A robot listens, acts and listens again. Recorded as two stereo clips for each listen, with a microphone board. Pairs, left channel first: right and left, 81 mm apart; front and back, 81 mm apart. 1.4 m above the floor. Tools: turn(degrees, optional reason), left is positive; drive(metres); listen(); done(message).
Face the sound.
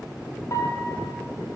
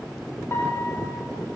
turn(degrees=-50, reason="The piano: 50° right.")
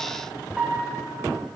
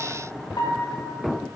done("Facing the piano, 1 to 2 m away.")